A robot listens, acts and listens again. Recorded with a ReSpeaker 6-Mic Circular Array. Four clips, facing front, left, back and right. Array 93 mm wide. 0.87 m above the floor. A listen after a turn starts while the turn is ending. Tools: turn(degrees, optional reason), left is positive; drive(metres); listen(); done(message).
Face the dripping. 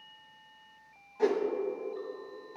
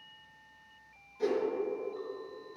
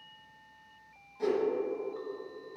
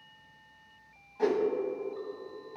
listen()
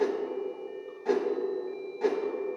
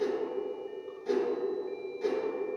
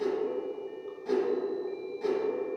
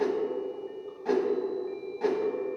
listen()
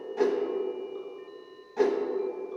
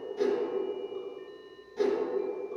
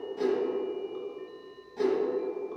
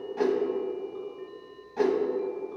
done("I can't make out dripping, only a whoosh.")